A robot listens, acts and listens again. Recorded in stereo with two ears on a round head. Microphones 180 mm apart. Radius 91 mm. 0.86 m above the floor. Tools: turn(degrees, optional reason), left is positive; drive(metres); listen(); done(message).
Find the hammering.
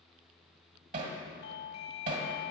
turn(degrees=-40, reason="The hammering: about 40° right or 140° right.")
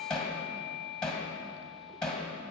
done("Facing the hammering, 1 to 2 m away.")